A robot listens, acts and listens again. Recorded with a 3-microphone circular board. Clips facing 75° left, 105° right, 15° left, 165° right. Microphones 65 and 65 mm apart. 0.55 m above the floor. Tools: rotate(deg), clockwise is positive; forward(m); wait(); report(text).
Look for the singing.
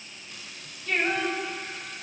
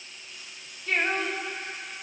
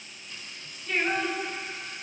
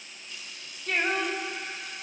rotate(150)
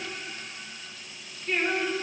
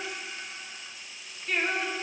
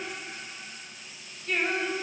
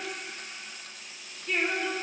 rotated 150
rotate(25)
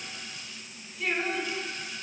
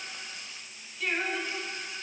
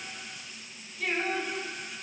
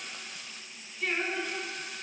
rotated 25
report("Found it: singing, straight ahead, over 4 m away.")